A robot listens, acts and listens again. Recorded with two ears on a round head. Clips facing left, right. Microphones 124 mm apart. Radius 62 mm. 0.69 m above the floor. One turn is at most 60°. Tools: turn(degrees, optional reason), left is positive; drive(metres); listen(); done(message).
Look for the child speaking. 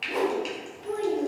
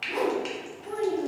turn(degrees=60, reason="The child speaking: about 65° left or 115° left.")
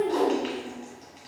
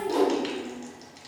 turn(degrees=35, reason="So it is at 35° left.")
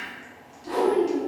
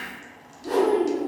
turn(degrees=-25, reason="The child speaking is now 25° right.")
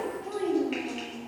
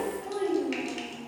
done("Facing the child speaking, 2 to 4 m away.")